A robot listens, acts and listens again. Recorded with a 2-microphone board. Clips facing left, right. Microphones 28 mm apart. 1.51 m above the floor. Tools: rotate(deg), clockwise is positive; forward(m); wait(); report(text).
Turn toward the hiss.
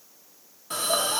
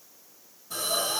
rotate(-90)
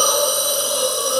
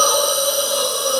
report("Found it: a hiss, straight ahead, 2 to 4 m away.")